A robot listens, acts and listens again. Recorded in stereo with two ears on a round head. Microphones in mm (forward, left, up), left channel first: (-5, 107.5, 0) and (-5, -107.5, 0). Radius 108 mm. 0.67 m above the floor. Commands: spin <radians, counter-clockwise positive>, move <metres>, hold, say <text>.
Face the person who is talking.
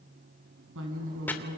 spin -0.96
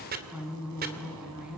say Facing the woman speaking.